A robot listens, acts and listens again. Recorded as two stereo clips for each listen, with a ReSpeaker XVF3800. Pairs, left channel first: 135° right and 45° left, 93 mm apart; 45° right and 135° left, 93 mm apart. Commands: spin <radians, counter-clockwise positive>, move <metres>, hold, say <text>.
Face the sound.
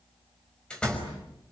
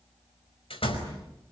spin -0.96
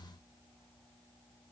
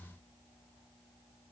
say I heard a door slam from this way, but can't make it out now.